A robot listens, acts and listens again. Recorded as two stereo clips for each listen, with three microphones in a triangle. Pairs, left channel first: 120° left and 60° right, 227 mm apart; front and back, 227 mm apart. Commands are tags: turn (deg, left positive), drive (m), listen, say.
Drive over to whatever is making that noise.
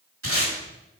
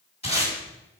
<turn deg="-65"/>
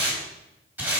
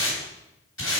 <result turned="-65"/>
<turn deg="20"/>
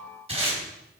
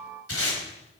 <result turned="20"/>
<drive m="1.0"/>
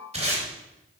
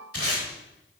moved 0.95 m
<drive m="1.0"/>
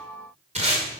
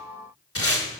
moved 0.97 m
<drive m="1.0"/>
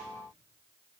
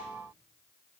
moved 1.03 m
<listen/>
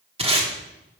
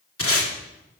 <drive m="1.0"/>
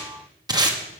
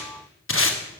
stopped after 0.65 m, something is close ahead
<turn deg="10"/>
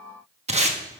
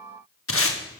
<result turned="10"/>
<say>I am next to the tape being pulled.</say>